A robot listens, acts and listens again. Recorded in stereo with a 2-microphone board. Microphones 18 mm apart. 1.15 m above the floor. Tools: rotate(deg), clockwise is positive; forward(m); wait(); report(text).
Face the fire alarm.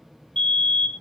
rotate(-75)
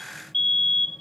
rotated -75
rotate(-25)
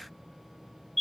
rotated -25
report("Found it: a fire alarm, straight ahead.")